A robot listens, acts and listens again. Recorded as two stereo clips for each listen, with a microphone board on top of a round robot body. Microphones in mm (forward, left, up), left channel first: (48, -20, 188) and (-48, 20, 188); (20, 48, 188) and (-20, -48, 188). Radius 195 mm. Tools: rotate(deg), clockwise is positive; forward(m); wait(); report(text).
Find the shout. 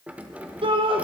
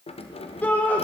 rotate(-140)
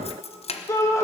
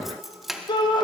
rotate(-35)
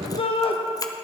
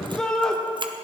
rotate(15)
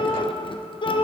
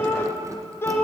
report("Facing the shout, 2 to 4 m away.")